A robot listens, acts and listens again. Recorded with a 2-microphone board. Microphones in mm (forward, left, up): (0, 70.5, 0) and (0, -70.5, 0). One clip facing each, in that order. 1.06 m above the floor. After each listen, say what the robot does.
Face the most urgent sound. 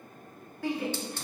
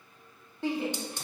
Turn 25° right.
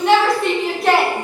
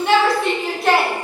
Found it: a shout, straight ahead, 1 to 2 m away.